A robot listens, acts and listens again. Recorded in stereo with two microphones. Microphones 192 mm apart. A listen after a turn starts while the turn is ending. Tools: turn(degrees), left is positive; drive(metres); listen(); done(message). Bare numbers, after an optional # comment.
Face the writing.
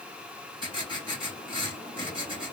# The writing: about 30° right or 150° right.
turn(-30)
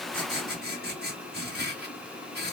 # So it is at 125° right.
turn(-125)
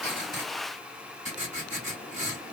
# The writing is now 40° right.
turn(-40)
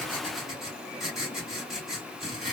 done("Facing the writing, 2 to 4 m away.")